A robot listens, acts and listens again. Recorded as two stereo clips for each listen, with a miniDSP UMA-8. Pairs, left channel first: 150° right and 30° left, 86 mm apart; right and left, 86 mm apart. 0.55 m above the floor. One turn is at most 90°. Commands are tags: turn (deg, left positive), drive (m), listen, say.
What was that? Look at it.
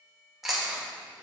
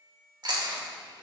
<turn deg="90"/>
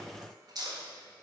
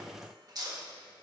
<turn deg="60"/>
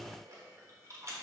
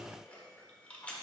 <turn deg="-15"/>
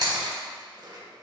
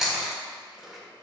<say>Facing the chewing.</say>